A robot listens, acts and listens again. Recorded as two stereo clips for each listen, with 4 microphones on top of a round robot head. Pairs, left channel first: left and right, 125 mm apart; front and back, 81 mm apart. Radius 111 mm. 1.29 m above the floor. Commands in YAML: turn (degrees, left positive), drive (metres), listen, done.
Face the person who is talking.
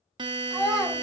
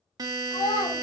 done: "Found it: a child speaking, straight ahead."